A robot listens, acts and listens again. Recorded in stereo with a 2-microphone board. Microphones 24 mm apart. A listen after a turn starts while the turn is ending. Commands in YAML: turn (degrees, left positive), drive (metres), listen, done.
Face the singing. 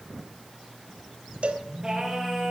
turn: -25
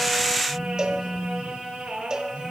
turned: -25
turn: -130
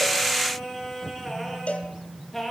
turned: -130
done: "Found it: singing, straight ahead."